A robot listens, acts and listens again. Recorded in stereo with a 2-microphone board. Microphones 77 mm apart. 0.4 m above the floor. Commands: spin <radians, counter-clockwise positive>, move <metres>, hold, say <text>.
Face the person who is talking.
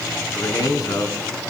spin 0.87
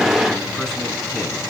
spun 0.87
hold
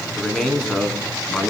say Facing the man speaking, 2 to 4 m away.